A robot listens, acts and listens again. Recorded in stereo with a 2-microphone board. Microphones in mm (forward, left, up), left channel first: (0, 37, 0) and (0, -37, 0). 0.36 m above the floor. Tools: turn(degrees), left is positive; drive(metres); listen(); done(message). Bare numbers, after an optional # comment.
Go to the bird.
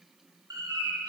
# The bird: about 60° right or 120° right.
turn(-60)
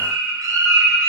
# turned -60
# So it is at 60° right.
turn(-60)
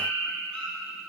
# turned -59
drive(1.0)
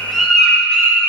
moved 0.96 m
drive(1.0)
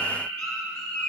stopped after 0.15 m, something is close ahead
# The bird is now 15° left.
turn(15)
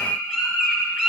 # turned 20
done("Arrived at the bird, straight ahead.")